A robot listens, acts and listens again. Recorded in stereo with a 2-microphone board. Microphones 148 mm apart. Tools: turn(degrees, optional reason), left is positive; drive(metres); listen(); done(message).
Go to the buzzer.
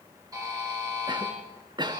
turn(degrees=-25, reason="The buzzer: about 25° right or 155° right.")
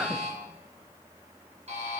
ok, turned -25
turn(degrees=-130, reason="So it is at 130° right.")
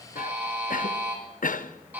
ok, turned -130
turn(degrees=-10, reason="The buzzer is now 10° right.")
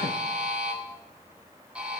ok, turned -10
turn(degrees=-10, reason="The buzzer is now 10° right.")
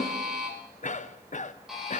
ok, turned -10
drive(metres=1.0)
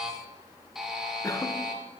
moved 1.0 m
drive(metres=1.0)
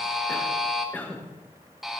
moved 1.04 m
drive(metres=1.0)
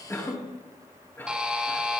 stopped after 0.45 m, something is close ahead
done("Arrived at the buzzer, straight ahead.")